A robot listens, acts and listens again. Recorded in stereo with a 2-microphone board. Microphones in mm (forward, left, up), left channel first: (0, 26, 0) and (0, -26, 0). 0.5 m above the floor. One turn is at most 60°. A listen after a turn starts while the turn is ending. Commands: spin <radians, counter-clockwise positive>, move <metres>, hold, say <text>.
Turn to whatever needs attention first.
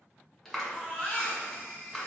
spin 0.61
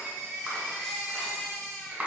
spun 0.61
spin 0.17
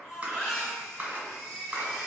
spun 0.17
say Found it: a baby crying, straight ahead, 1 to 2 m away.